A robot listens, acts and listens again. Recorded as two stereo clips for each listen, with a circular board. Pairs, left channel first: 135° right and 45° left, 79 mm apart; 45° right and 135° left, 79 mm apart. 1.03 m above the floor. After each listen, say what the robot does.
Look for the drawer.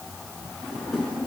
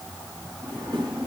Turn 140° left.
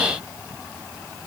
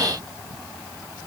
Keep listening.
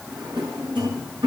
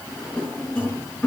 Turn 30° left.
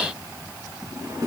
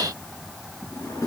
Found it: a drawer, straight ahead, over 4 m away.